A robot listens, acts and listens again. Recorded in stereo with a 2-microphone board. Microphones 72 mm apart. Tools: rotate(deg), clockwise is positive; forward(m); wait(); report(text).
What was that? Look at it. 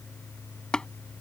rotate(-30)
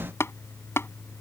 rotate(-140)
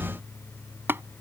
rotate(35)
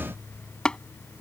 rotate(-10)
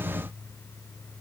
wait()
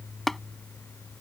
report("Found it: tapping, straight ahead.")